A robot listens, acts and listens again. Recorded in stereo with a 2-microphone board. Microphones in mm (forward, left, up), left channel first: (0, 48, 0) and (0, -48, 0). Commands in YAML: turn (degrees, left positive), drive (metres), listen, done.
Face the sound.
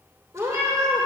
turn: -30
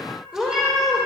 done: "Found it: a cat meowing, straight ahead, 2 to 4 m away."